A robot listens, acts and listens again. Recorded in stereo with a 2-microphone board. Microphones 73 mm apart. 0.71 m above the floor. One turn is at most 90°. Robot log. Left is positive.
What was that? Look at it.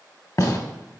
note: The gunshot: about 50° left or 130° left.
cmd yaw +50
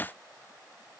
cmd idle
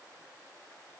end: I heard a gunshot, but can't make it out now. It was about straight ahead or 80° left.